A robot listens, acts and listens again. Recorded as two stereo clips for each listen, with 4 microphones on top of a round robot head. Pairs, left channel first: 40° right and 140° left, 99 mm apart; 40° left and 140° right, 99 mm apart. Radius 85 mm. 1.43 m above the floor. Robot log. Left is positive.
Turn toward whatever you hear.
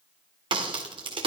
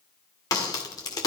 note: The crack: 95° left.
cmd yaw +95
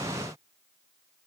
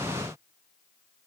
end: I heard a crack from this way, but can't make it out now.